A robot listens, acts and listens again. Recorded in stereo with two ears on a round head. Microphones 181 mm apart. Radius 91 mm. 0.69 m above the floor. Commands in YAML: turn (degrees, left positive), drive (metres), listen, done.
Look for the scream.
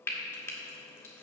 listen: true
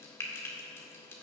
listen: true
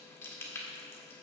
done: "I can't make out a scream to turn to."